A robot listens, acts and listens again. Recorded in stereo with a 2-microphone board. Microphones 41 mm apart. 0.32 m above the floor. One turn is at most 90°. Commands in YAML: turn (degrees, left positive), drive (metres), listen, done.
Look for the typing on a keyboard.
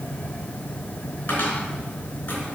listen: true
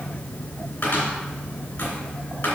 listen: true
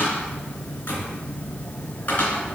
done: "I can't make out typing on a keyboard to turn to."